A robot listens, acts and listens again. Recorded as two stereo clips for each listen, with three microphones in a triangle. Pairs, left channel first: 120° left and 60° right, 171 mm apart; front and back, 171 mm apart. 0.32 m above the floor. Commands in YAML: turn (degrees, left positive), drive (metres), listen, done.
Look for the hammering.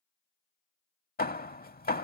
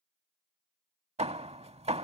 turn: 135
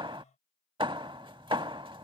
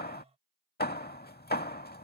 done: "Facing the hammering."